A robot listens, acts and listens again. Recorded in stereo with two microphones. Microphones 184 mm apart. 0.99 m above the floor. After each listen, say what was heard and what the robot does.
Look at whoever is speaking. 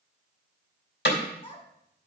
The child speaking: about 30° left or 150° left. Turn 30° left.
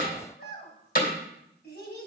So it is at 120° left. Turn 120° left.
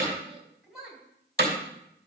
Facing the child speaking, 2 to 4 m away.